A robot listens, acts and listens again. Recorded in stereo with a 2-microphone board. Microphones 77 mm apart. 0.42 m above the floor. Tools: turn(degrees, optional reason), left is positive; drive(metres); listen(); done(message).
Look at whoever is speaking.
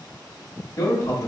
turn(degrees=55, reason="The man speaking: about 55° left or 125° left.")
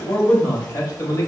turn(degrees=50, reason="So it is at 50° left.")
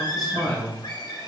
done("Found it: a man speaking, straight ahead, 1 to 2 m away.")